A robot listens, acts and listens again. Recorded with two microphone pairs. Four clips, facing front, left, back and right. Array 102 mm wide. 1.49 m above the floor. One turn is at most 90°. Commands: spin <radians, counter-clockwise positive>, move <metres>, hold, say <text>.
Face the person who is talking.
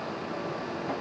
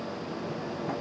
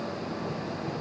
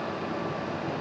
hold
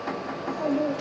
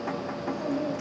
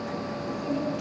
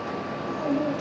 spin -0.44
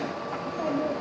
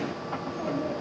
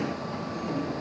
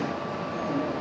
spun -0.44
hold
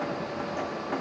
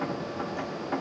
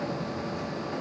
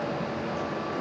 hold
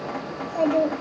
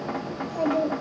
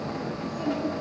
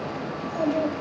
say Found it: a child speaking, straight ahead, over 4 m away.